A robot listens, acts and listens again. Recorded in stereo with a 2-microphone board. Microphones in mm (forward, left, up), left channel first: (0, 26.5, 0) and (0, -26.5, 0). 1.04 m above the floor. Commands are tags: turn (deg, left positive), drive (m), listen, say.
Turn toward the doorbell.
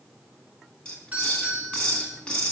<turn deg="-30"/>
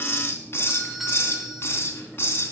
<say>Found it: a doorbell, straight ahead, over 4 m away.</say>